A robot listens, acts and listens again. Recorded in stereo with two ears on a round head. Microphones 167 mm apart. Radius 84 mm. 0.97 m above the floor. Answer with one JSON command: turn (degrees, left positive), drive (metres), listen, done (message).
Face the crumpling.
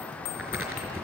{"turn": -30}
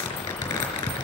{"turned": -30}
{"turn": 20}
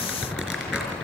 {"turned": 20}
{"done": "Facing the crumpling."}